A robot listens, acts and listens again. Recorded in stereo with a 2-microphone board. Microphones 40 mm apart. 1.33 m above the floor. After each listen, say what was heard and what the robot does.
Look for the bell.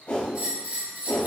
The bell: about 55° right or 125° right. Turn 55° right.
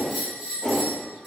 Facing the bell.